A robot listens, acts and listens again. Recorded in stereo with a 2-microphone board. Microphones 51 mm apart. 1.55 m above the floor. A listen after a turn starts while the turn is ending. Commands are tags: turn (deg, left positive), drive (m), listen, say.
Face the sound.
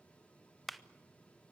<turn deg="30"/>
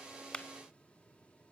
<listen/>
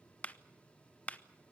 <turn deg="150"/>
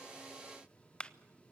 <turn deg="20"/>
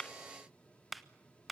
<say>Found it: a clap, straight ahead.</say>